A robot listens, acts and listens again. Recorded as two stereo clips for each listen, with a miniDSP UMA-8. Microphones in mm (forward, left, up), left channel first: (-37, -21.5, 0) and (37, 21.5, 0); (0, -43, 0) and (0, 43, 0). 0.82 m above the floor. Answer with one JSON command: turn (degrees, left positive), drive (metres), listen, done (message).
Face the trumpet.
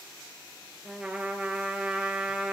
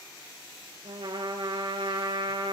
{"turn": 110}
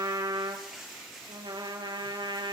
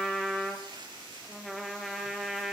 {"done": "Facing the trumpet, over 4 m away."}